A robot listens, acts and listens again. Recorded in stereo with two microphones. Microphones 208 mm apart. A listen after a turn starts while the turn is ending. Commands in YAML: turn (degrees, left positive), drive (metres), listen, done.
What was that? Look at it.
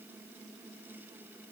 listen: true
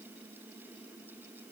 listen: true
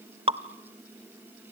turn: -25
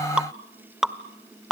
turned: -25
done: "Found it: dripping, straight ahead, under 1 m away."